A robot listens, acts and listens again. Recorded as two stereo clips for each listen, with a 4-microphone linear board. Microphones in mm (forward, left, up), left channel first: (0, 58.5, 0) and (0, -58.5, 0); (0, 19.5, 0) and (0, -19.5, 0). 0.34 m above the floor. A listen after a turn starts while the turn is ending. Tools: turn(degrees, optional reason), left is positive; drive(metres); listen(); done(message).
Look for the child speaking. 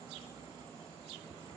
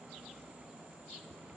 listen()
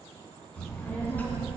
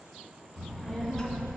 turn(degrees=20, reason="The child speaking: about 20° left or 160° left.")
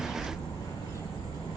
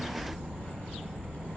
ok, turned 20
turn(degrees=135, reason="So it is at 135° left.")
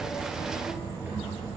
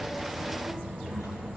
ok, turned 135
turn(degrees=-15, reason="The child speaking is now 15° right.")
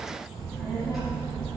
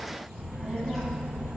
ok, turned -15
done("Found it: a child speaking, straight ahead.")